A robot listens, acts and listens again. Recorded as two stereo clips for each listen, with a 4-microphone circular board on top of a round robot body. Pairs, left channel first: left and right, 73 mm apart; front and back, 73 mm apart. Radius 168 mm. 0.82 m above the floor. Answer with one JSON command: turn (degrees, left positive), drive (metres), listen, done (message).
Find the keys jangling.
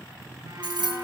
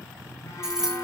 {"turn": -95}
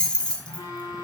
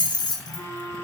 {"turn": 15}
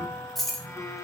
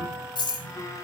{"done": "Found it: keys jangling, straight ahead."}